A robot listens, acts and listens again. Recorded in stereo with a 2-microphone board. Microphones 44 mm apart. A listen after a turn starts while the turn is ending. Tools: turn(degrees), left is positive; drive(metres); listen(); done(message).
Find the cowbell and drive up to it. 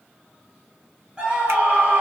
listen()
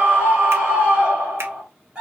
listen()
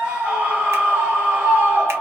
done("I can't make out a cowbell to turn to.")